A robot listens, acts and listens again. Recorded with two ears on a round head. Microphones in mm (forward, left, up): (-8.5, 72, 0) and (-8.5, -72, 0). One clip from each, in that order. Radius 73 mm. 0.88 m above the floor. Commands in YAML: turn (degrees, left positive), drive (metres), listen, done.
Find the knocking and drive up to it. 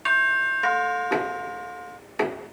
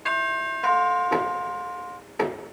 turn: 60
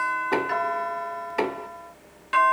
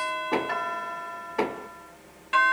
turn: 55
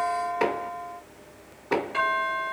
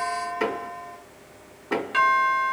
drive: 1.0
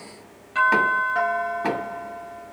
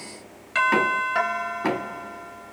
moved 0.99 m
drive: 1.0
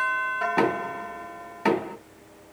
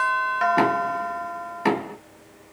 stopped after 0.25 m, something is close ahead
done: "Arrived at the knocking, straight ahead."